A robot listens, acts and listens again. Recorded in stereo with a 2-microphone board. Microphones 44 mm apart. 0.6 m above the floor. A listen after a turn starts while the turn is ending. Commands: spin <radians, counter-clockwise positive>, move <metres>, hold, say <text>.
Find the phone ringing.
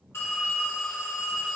spin 1.31
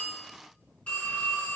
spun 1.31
spin 0.61
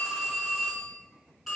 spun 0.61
say Found it: a phone ringing, straight ahead, 2 to 4 m away.